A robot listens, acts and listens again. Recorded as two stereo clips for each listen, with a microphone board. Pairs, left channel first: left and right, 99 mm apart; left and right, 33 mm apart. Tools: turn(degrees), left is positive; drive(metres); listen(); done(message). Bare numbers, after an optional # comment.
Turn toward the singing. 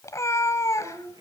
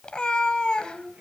# The singing: about 50° right or 130° right.
turn(-50)
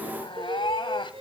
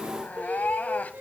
# So it is at 80° right.
turn(-80)
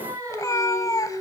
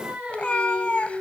# The singing is now 35° right.
turn(-35)
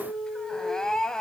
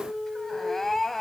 done("Found it: singing, straight ahead, 2 to 4 m away.")